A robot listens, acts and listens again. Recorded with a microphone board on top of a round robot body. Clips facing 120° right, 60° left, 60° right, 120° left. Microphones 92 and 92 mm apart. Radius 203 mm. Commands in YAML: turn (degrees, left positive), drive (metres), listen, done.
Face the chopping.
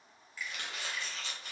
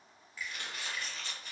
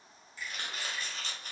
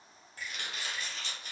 turn: -115
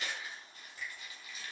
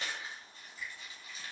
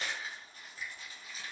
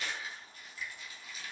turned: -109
done: "Facing the chopping."